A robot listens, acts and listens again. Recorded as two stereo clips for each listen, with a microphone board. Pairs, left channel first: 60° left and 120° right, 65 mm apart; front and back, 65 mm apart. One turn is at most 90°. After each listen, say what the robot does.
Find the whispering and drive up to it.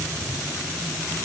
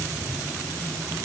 Keep listening.
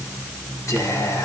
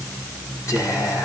Turn 30° left.
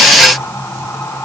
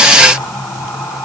Turn 15° left.
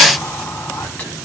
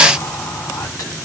Keep listening.
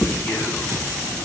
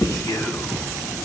Drive 1.0 m forward.
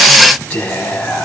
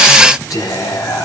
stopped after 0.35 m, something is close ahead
Turn 10° right.
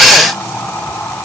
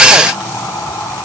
Something is in my way. I am facing the whispering but have not reached it.